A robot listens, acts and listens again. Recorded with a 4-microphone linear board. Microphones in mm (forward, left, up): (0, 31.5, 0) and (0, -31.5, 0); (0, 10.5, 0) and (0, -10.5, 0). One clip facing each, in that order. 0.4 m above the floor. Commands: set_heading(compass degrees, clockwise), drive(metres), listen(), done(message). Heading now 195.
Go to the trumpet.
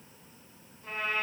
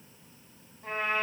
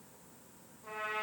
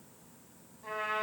set_heading(240)
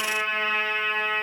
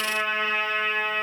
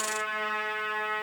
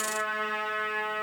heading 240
drive(1.0)
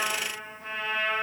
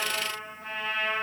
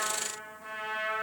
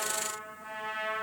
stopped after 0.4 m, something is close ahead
done("Blocked. The trumpet is further on, straight ahead.")